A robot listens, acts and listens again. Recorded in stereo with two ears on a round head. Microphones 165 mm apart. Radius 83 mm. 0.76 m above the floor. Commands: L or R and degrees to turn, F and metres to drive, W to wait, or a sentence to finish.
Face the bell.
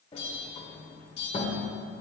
L70
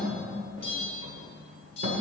L35
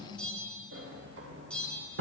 Facing the bell, 2 to 4 m away.